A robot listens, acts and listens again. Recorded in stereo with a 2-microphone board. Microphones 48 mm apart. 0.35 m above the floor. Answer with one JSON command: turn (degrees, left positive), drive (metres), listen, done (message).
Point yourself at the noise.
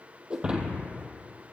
{"turn": -20}
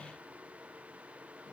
{"listen": true}
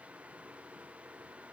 {"done": "I heard breaking glass, but can't make it out now. It was about straight ahead or 140° right."}